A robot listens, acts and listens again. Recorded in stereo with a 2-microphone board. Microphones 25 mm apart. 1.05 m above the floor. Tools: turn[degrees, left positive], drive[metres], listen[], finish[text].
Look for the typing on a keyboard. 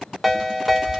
Thought: The typing on a keyboard: about 35° right or 145° right.
Action: turn[-35]
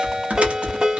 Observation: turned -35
Thought: So it is at 110° right.
Action: turn[-110]
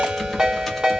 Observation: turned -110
Action: finish[Facing the typing on a keyboard, 1 to 2 m away.]